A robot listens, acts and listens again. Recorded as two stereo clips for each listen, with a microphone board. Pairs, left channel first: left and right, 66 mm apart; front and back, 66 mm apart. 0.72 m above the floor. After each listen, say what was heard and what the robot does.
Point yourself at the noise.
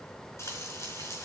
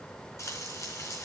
The frying: 45° left. Turn 45° left.
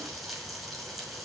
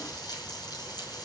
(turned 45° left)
Found it: frying, straight ahead, over 4 m away.